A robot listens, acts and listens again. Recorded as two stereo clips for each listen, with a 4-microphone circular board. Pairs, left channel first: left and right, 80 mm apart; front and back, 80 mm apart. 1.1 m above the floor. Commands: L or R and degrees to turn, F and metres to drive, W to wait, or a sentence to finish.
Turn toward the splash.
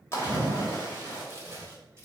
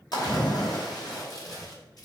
L35
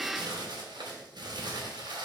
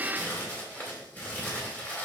Facing where the splash came from. I can't hear it now.